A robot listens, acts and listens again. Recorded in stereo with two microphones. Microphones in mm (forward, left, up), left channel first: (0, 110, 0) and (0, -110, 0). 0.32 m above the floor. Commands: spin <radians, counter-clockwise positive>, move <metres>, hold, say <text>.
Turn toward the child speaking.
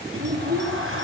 spin -0.79
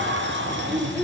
say Found it: a child speaking, straight ahead.